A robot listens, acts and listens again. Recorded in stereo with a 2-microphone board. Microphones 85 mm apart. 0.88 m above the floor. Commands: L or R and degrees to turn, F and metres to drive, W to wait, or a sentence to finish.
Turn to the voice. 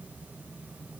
W
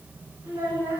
R30
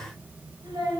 R120
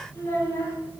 L30
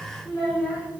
Facing the child speaking, 2 to 4 m away.